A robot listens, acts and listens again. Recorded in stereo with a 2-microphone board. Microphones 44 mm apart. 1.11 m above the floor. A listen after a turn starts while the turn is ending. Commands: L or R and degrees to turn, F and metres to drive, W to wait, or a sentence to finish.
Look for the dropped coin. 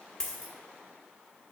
L30
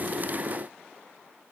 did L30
W
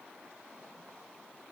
I heard a dropped coin, but can't make it out now. It was about 15° right or 135° left.